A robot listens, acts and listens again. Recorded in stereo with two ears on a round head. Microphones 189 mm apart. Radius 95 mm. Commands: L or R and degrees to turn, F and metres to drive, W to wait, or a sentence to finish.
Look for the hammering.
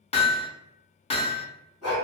L30
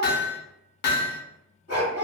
L115
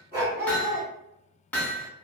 L10
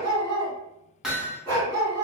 Found it: hammering, straight ahead.